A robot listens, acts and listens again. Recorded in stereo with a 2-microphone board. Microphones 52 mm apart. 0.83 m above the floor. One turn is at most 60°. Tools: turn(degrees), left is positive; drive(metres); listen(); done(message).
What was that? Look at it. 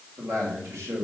turn(degrees=-60)
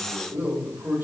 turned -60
turn(degrees=-55)
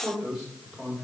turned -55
turn(degrees=-10)
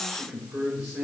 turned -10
turn(degrees=-10)
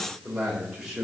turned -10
done("Facing the man speaking, over 4 m away.")